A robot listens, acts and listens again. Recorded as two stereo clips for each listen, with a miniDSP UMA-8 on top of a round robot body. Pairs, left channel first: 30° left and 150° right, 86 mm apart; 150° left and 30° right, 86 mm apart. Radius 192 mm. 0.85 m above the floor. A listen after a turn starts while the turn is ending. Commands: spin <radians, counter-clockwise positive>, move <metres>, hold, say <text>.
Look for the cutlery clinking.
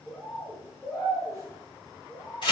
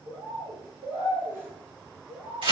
hold
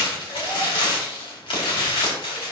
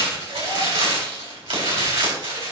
hold
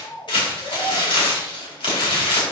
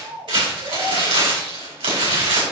say I can't make out cutlery clinking to turn to.